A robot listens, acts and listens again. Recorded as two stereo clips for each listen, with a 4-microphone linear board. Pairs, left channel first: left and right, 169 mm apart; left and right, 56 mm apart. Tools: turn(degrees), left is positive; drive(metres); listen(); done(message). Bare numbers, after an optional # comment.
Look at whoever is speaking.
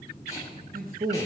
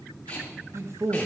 # The man speaking: about 60° right or 120° right.
turn(-60)
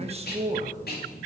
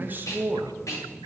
# So it is at 45° right.
turn(-45)
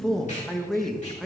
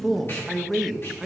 done("Facing the man speaking.")